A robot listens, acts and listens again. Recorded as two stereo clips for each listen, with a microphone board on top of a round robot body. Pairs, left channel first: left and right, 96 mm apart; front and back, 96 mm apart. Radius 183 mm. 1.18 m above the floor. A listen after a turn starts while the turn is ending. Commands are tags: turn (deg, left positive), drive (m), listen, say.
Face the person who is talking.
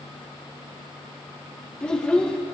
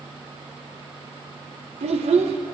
<turn deg="170"/>
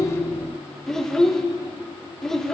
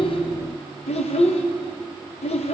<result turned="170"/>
<say>Found it: a child speaking, straight ahead.</say>